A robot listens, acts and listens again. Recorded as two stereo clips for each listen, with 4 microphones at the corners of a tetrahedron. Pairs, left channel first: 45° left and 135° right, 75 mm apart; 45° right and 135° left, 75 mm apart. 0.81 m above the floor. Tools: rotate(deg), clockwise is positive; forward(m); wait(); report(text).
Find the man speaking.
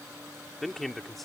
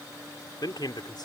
rotate(45)
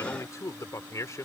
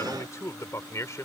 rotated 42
report("Found it: a man speaking, straight ahead.")